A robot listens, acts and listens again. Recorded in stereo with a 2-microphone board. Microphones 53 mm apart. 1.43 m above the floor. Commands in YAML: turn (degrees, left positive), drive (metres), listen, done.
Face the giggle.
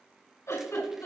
turn: 65
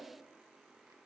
listen: true
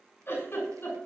turn: 45
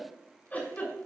turn: 30
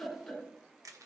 turn: 20
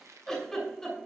done: "Facing the giggle, over 4 m away."